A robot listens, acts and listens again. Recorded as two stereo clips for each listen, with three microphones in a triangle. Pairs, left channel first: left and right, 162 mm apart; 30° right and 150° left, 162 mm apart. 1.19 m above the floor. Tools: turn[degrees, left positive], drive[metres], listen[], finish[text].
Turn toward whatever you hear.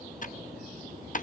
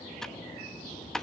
Thought: The typing on a keyboard: 55° left.
Action: turn[55]
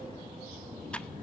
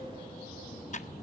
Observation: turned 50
Action: listen[]
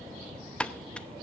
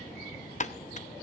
Action: finish[Found it: typing on a keyboard, straight ahead.]